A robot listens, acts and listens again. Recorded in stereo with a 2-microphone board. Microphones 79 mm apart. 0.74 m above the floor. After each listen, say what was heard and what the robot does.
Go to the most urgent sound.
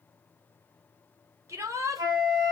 The shout: about 40° right or 140° right. Turn 40° right.
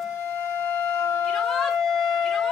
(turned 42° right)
Keep listening.
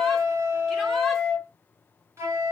Keep listening.
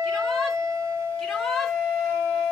Drive 1.0 m forward.
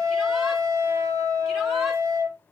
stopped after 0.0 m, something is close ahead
Keep listening.
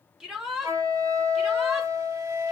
The shout is now 10° right. Turn 10° right.
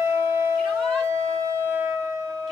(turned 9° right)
Keep listening.
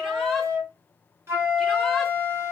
Keep listening.
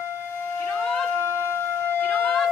Facing where the shout came from. I can't hear it now. I did not reach it.